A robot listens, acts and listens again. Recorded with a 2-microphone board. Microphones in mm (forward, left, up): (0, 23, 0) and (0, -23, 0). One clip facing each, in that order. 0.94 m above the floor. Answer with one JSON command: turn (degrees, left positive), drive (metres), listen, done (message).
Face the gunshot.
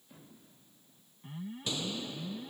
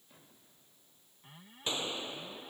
{"turn": -30}
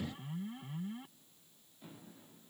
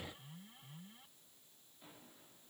{"listen": true}
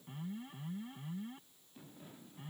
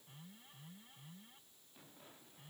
{"done": "I heard a gunshot, but can't make it out now. It was about straight ahead or 120° right."}